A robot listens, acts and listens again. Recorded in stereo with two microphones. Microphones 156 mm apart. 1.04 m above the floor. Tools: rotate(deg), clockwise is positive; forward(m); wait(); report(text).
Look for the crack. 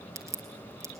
rotate(20)
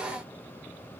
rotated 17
wait()
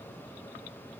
report("I heard a crack, but can't make it out now. It was about 5° right or 145° right.")